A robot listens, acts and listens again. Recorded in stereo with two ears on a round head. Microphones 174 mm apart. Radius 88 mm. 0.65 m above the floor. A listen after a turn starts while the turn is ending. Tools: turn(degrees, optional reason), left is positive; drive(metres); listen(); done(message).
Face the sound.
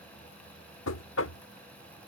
turn(degrees=75, reason="The knocking: about 75° left or 105° left.")
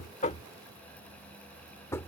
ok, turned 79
turn(degrees=15, reason="So it is at 15° left.")
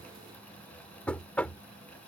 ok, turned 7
done("Facing the knocking.")